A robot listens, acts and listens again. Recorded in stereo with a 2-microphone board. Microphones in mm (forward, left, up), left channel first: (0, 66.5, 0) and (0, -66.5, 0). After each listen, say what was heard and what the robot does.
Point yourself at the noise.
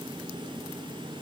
Keep listening.
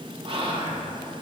The whispering: about 45° right or 135° right. Turn 45° right.
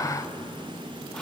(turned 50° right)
Keep listening.
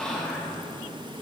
Found it: whispering, straight ahead.